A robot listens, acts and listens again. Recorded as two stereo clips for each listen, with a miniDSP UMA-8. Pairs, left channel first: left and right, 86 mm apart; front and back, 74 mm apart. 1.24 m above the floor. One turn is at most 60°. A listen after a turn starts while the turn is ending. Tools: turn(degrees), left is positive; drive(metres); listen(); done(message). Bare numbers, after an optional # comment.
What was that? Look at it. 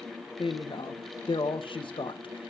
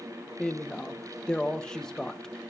# The woman speaking: 80° left.
turn(60)
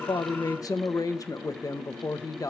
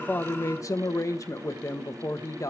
# The woman speaking is now 45° left.
turn(45)
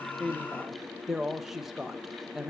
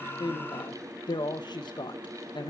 done("Facing the woman speaking, 1 to 2 m away.")